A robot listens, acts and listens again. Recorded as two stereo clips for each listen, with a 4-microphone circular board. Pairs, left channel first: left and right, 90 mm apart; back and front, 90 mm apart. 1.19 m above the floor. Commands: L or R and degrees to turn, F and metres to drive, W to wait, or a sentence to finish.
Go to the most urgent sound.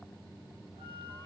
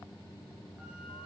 W
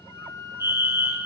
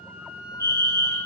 R35
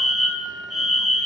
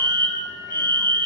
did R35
F1.0
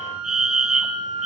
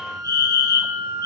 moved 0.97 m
F1.0
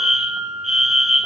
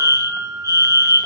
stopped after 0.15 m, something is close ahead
Arrived at the fire alarm, straight ahead.